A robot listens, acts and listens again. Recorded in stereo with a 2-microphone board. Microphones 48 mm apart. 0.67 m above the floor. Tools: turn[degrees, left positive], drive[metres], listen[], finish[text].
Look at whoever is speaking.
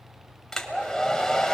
Action: listen[]
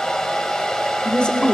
Thought: The woman speaking: about 20° left or 160° left.
Action: turn[20]
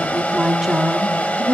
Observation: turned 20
Thought: So it is at 15° right.
Action: turn[-15]
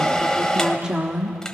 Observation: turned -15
Thought: The woman speaking is now 20° right.
Action: turn[-20]
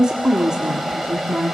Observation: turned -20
Thought: The woman speaking is now 15° right.
Action: turn[-15]
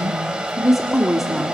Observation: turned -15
Action: finish[Found it: a woman speaking, straight ahead, 1 to 2 m away.]